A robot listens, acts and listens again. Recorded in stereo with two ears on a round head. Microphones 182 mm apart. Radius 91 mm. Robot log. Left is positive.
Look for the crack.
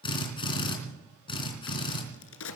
note: The crack: about 70° left or 110° left.
cmd yaw +70
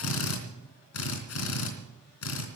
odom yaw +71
cmd idle
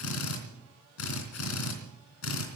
end: I heard a crack, but can't make it out now. It was about straight ahead or 35° left.